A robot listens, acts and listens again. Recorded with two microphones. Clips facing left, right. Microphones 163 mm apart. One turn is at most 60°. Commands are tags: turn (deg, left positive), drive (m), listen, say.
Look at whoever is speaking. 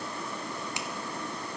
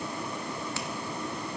<listen/>
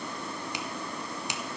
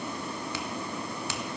<listen/>
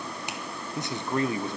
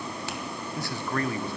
<turn deg="20"/>
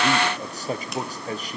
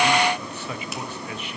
<turn deg="60"/>
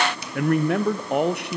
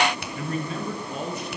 <turn deg="60"/>
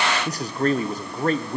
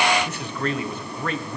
<turn deg="40"/>
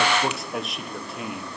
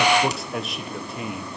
<say>Facing the man speaking, 1 to 2 m away.</say>